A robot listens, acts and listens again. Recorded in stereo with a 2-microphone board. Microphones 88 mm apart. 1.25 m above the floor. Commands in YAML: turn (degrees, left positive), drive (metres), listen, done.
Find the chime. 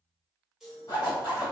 turn: -30
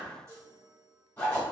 turn: -145
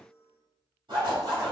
turn: -10
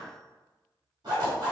listen: true
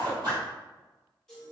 done: "Found it: a chime, straight ahead, 1 to 2 m away."